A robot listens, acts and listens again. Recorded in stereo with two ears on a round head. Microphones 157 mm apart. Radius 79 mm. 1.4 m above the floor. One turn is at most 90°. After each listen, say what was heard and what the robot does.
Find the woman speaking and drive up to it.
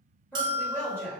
Turn 30° left.
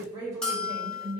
So it is at 20° right. Turn 20° right.
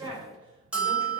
The woman speaking is now 10° right. Turn 10° right.
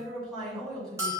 Drive 1.0 m forward.
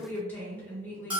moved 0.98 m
The woman speaking is now 10° left. Turn 10° left.
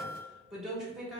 Drive 1.0 m forward.
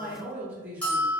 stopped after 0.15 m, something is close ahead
The woman speaking is now 10° right. Turn 10° right.
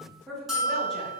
Arrived at the woman speaking, straight ahead.